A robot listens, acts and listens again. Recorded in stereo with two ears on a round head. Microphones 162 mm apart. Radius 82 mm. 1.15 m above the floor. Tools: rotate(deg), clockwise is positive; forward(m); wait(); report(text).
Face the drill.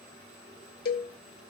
wait()
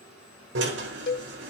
rotate(90)
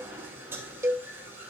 rotate(15)
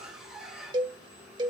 report("Found it: a drill, straight ahead, over 4 m away.")